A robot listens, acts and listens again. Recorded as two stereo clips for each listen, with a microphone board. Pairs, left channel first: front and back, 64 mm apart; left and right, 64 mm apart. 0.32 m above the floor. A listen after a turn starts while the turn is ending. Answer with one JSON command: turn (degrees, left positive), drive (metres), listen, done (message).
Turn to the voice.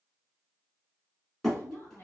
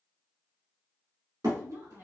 {"turn": -55}
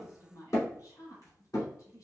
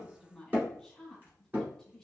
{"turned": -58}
{"done": "Found it: a woman speaking, straight ahead."}